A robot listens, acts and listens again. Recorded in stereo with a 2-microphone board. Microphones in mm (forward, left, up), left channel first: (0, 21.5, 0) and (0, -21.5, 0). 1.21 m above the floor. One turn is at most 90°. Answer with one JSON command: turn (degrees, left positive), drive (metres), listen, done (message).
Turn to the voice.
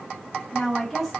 {"turn": 30}
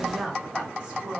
{"turn": -25}
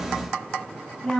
{"turn": 10}
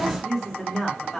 {"done": "Facing the woman speaking."}